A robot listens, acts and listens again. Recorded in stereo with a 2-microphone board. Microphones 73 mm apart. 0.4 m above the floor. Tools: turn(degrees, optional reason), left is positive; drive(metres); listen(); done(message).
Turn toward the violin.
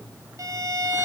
turn(degrees=-50, reason="The violin: about 50° right or 130° right.")
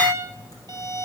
turn(degrees=-80, reason="So it is at 80° right.")
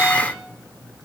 listen()
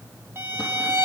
turn(degrees=-35, reason="The violin is now 35° right.")
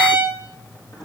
turn(degrees=-25, reason="The violin is now 25° right.")
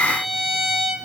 done("Found it: a violin, straight ahead, 2 to 4 m away.")